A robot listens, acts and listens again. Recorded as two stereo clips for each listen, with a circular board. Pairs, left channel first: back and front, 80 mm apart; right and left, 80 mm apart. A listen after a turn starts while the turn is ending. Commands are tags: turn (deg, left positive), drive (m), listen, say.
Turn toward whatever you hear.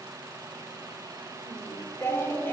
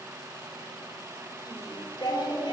<turn deg="-115"/>
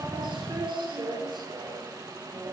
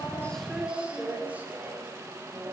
<turn deg="35"/>
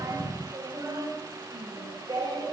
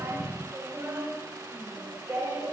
<turn deg="30"/>
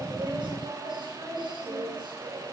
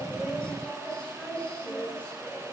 <turn deg="-15"/>
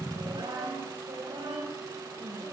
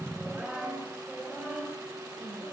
<say>Found it: singing, straight ahead.</say>